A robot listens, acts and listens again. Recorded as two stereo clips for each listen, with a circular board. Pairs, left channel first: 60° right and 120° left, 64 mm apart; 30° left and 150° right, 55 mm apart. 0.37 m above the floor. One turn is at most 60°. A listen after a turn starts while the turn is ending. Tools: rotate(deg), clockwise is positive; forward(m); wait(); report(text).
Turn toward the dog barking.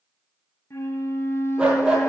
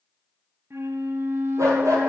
rotate(60)
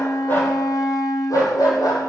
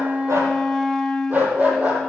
rotate(60)
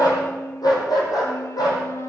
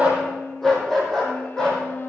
rotate(50)
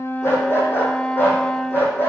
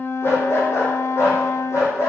report("Found it: a dog barking, straight ahead, 2 to 4 m away.")